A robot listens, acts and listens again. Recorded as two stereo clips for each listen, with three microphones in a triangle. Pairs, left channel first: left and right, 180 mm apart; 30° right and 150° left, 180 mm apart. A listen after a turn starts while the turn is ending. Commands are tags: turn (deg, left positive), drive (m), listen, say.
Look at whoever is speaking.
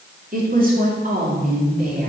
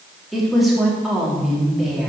<turn deg="-120"/>
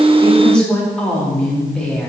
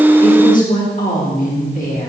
<say>Found it: a woman speaking, straight ahead.</say>